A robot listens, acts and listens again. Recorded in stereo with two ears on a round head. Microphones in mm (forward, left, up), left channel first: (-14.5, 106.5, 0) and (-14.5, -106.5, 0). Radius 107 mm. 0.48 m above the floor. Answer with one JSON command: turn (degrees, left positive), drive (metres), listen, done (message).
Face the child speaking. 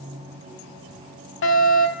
{"listen": true}
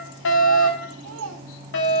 {"turn": -60}
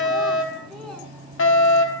{"listen": true}
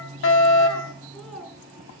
{"done": "Found it: a child speaking, straight ahead, over 4 m away."}